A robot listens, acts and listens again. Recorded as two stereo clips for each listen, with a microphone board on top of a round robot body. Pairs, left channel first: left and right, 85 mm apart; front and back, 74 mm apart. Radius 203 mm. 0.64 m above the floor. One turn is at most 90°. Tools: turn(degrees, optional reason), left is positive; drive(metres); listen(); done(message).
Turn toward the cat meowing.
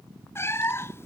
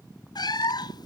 turn(degrees=30, reason="The cat meowing: 30° left.")
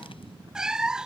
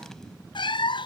done("Found it: a cat meowing, straight ahead.")